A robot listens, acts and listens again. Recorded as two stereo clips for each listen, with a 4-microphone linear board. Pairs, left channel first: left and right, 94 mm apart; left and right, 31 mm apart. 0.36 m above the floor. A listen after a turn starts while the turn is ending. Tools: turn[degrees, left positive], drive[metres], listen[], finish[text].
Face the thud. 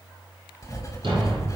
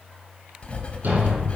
Thought: The thud: about 65° right or 115° right.
Action: turn[-65]
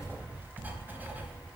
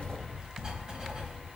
Action: listen[]
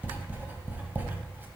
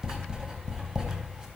Action: finish[I heard a thud, but can't make it out now. It was about straight ahead or 50° right.]